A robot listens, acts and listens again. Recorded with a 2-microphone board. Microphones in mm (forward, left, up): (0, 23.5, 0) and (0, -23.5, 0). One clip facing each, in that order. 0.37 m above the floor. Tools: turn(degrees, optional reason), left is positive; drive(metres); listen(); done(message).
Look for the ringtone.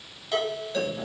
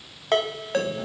turn(degrees=-50, reason="The ringtone: about 50° right or 130° right.")
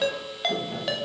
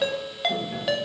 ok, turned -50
done("Facing the ringtone, under 1 m away.")